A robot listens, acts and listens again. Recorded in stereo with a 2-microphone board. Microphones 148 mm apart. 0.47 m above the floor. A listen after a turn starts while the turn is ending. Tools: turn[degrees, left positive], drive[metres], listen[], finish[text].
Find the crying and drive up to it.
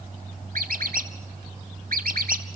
Action: listen[]
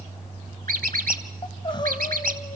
Thought: The crying: about 35° left or 145° left.
Action: turn[35]
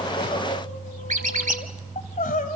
Thought: So it is at 110° left.
Action: turn[110]
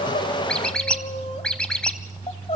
Thought: The crying is now 45° left.
Action: turn[45]
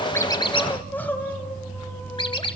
Thought: The crying is now 10° left.
Action: turn[10]
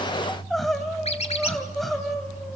Action: drive[1.0]
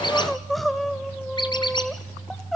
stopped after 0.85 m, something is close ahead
Action: finish[Arrived at the crying, straight ahead.]